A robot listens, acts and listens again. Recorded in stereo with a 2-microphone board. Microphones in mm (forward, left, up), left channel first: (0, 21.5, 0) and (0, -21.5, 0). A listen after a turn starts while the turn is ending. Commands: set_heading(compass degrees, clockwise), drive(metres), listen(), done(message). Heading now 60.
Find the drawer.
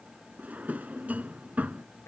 set_heading(95)
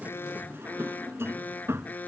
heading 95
set_heading(200)
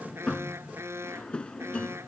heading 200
set_heading(175)
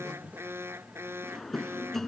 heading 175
done("Found it: a drawer, straight ahead.")